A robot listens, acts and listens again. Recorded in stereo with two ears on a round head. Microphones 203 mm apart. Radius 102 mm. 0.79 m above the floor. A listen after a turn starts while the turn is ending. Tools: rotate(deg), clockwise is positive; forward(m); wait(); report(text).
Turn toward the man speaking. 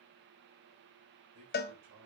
rotate(90)
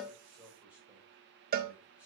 wait()
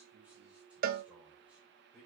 report("Facing the man speaking, 2 to 4 m away.")